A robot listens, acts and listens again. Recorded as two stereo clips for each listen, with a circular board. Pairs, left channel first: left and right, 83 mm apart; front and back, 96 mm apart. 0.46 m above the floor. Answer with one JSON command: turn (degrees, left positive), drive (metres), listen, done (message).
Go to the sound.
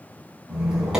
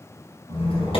{"drive": 1.0}
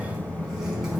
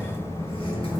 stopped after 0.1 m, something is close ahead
{"done": "Blocked. The squeak is further on, straight ahead."}